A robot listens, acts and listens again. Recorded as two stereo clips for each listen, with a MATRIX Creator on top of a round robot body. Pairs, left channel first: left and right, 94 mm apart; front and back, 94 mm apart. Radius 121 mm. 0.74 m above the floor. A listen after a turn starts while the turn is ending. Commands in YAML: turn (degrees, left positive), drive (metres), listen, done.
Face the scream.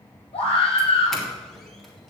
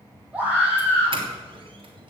turn: 100
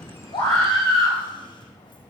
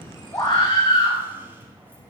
turn: 40
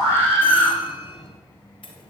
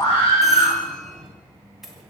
turn: 20
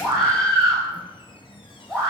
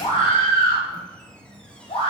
done: "Facing the scream."